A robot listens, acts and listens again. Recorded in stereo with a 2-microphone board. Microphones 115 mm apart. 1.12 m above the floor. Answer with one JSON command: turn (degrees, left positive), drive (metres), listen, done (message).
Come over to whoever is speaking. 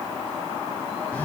{"listen": true}
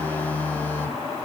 {"listen": true}
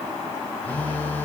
{"done": "I can't make out anyone speaking, only a phone buzzing."}